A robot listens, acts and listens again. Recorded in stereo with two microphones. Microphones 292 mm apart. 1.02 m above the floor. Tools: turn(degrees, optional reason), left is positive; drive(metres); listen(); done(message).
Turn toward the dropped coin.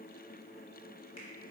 listen()
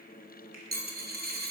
turn(degrees=-30, reason="The dropped coin: about 30° right or 150° right.")
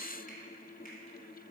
listen()
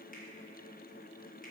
done("I heard a dropped coin, but can't make it out now. It was about straight ahead or 120° right.")